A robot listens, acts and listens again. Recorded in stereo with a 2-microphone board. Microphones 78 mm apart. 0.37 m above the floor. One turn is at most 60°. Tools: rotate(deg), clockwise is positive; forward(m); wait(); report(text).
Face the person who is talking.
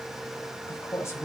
rotate(-35)
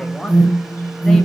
wait()
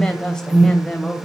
rotate(-10)
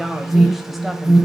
wait()
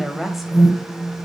report("Facing the woman speaking, 1 to 2 m away.")